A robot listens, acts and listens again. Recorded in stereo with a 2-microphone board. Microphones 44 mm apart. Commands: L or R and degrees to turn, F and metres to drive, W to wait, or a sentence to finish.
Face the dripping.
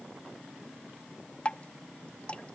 L30
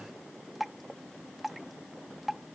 Facing the dripping.